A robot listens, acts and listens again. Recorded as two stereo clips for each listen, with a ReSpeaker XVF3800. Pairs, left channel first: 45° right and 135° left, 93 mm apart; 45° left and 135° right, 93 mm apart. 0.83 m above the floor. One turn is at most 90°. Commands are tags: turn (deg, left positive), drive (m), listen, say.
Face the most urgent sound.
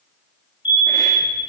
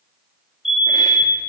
<turn deg="-50"/>
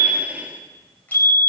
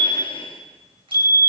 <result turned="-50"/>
<say>Facing the fire alarm.</say>